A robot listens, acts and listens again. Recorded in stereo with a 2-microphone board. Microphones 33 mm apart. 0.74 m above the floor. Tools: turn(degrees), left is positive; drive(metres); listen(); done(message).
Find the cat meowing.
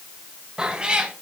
turn(degrees=-35)
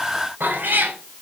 turn(degrees=-95)
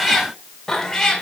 turn(degrees=20)
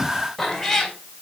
turn(degrees=10)
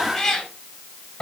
turn(degrees=20)
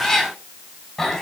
done("Facing the cat meowing.")